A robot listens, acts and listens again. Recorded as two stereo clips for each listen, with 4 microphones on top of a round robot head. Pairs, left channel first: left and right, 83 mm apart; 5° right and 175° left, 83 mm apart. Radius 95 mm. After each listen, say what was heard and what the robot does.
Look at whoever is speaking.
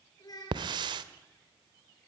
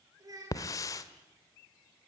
The child speaking: 130° left. Turn 130° left.
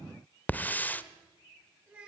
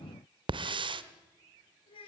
The child speaking is now 15° right. Turn 15° right.
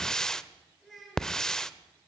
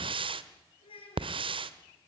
Facing the child speaking, over 4 m away.